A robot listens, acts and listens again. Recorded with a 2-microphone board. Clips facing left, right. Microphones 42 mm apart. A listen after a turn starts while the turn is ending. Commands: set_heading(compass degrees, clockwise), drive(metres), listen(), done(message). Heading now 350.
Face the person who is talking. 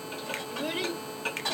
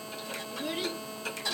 set_heading(300)
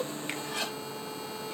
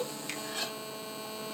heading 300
listen()
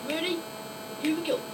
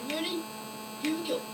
set_heading(240)
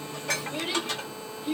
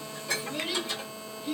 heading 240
set_heading(220)
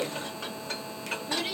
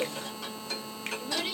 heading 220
done("Found it: a child speaking, straight ahead, 1 to 2 m away.")